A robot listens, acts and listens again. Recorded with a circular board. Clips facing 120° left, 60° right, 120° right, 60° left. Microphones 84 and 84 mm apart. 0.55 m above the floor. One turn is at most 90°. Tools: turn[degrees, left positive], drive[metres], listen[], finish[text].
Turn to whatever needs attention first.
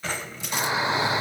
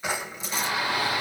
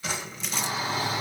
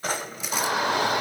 Thought: The shout: 55° left.
Action: turn[55]
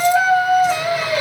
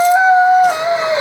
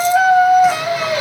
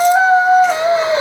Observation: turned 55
Action: finish[Facing the shout.]